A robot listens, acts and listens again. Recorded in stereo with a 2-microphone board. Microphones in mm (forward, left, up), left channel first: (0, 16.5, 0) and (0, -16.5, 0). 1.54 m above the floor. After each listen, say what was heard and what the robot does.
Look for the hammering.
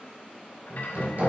The hammering: about 60° right or 120° right. Turn 60° right.
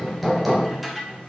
Facing the hammering.